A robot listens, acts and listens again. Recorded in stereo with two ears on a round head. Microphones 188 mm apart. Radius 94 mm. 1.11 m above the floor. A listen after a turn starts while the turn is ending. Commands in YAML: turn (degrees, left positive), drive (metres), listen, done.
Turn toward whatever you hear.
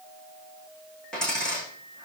turn: 30
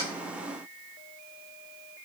listen: true
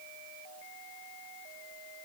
done: "I heard a dropped coin, but can't make it out now. It was about 25° right or 145° left."